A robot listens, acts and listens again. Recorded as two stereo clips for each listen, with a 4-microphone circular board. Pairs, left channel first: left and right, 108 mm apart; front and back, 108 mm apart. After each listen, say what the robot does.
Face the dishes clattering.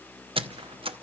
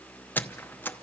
Keep listening.
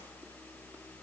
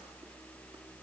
Keep listening.
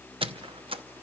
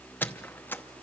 I can't make out dishes clattering, only a squeak.